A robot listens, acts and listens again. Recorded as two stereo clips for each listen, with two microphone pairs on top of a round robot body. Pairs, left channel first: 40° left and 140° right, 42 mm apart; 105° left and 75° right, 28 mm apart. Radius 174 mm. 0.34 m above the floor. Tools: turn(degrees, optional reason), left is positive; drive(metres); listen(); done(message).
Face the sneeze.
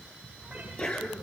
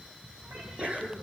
turn(degrees=-25, reason="The sneeze: 25° right.")
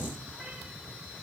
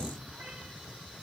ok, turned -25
done("Facing where the sneeze came from. I can't hear it now.")